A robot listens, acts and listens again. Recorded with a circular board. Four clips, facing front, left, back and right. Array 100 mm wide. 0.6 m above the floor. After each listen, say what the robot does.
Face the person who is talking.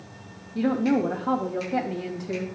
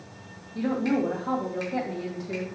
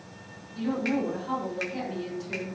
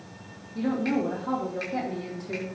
Turn 10° left.
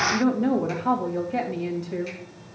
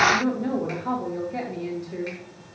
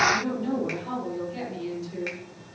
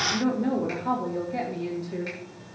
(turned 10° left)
Facing the woman speaking.